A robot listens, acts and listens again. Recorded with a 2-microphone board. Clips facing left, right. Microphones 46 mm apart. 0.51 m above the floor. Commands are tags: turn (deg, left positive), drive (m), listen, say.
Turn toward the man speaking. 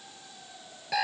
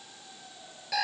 <listen/>
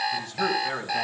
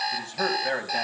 <turn deg="-70"/>
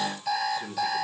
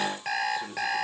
<turn deg="-25"/>
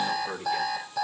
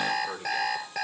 <say>Found it: a man speaking, straight ahead, 2 to 4 m away.</say>